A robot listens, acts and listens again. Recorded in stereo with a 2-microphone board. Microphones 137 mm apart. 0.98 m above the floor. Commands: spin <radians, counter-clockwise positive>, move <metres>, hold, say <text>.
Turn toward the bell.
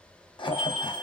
spin -0.52
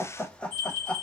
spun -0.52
spin 0.35
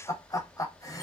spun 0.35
hold
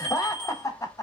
say Facing the bell.